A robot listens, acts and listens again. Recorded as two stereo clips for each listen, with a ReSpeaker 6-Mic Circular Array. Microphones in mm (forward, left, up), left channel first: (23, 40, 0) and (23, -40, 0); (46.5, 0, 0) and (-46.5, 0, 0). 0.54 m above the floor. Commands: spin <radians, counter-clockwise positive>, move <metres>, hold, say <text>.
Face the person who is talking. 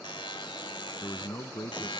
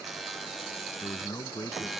spin 0.87
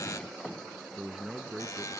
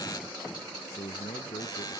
say Facing the man speaking.